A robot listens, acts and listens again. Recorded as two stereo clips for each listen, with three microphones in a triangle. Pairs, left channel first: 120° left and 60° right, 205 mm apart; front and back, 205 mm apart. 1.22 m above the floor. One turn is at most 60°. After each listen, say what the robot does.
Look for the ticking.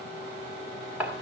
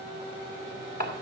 Keep listening.
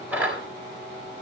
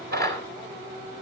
Keep listening.
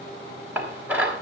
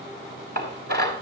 I can't make out ticking, only dishes clattering.